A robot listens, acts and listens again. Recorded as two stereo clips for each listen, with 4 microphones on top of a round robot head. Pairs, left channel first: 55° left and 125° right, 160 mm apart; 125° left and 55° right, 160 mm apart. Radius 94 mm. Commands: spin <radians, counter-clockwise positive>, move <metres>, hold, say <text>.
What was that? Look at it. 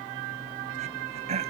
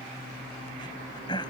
spin -3.05
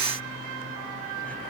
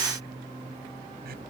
hold
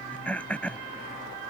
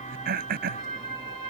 spin -0.44
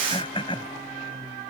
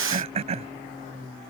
say Found it: throat clearing, straight ahead.